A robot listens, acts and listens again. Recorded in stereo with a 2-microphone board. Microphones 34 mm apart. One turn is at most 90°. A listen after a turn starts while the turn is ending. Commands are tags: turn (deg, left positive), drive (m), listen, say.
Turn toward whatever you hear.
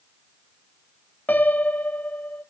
<turn deg="55"/>
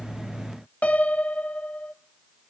<turn deg="55"/>
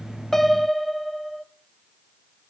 <say>Facing the piano, under 1 m away.</say>